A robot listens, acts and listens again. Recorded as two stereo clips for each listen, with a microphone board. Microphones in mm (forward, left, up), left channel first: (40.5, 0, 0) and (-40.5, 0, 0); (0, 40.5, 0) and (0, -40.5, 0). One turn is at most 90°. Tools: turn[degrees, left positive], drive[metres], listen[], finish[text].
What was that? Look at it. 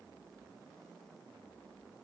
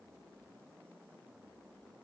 Action: listen[]
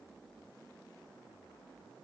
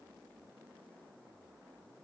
Action: listen[]
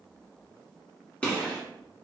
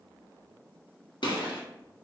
Thought: The gunshot: 75° left.
Action: turn[75]
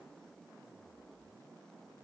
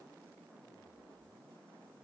Action: finish[I heard a gunshot from this way, but can't make it out now.]